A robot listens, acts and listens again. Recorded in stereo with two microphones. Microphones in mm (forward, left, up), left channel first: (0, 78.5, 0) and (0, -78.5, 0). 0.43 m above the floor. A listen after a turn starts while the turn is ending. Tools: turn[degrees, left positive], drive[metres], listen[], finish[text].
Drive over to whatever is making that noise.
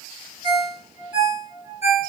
Thought: The ringtone: about 45° left or 135° left.
Action: turn[45]
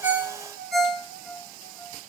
Thought: So it is at 95° left.
Action: turn[95]
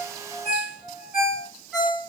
Action: drive[1.0]
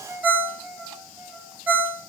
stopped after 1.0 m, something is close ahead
Thought: The ringtone is now 10° right.
Action: turn[-10]
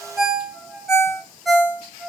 Action: finish[I am next to the ringtone.]